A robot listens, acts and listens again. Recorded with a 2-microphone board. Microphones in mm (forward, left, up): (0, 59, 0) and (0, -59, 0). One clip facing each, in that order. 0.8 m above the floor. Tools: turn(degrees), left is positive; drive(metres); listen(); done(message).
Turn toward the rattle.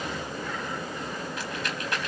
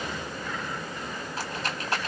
turn(degrees=-35)
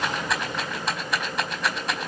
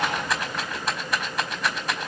done("Found it: a rattle, straight ahead, over 4 m away.")